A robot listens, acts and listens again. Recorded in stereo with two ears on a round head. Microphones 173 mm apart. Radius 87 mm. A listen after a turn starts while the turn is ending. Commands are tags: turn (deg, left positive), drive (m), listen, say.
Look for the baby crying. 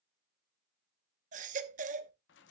<turn deg="-40"/>
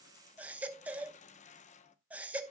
<turn deg="-10"/>
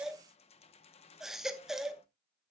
<say>Found it: a baby crying, straight ahead, under 1 m away.</say>